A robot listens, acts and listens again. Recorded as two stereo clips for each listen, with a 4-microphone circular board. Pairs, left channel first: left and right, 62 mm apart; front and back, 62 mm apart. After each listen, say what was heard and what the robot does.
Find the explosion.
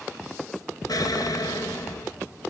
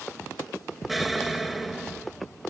The explosion: 90° left. Turn 90° left.
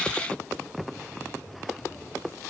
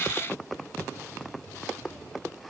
I heard an explosion from this way, but can't make it out now.